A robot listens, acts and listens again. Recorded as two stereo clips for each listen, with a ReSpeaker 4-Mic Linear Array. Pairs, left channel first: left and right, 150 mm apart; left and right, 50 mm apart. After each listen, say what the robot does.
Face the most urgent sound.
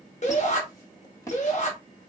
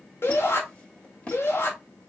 Turn 50° left.
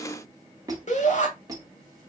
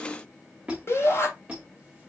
Turn 70° left.
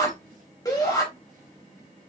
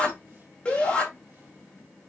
Turn 25° left.
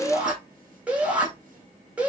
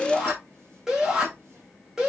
Turn 10° right.
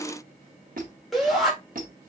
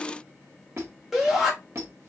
Facing the shout, 1 to 2 m away.